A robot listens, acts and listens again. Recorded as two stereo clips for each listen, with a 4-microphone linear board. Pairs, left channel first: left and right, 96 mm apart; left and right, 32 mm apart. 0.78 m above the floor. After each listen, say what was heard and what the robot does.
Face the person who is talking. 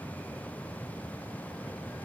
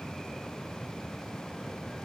Keep listening.
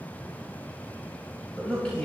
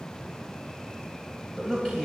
Turn 30° left.
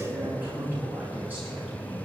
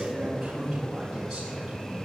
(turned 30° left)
So it is at 20° right. Turn 20° right.
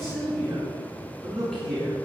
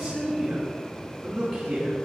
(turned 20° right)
Facing the man speaking.